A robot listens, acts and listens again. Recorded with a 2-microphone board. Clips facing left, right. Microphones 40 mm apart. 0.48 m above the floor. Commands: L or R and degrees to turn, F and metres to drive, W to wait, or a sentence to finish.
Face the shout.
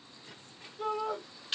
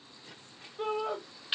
R45
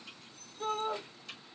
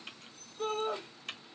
R80
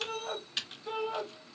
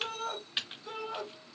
L15
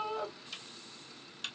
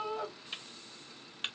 Facing the shout, 2 to 4 m away.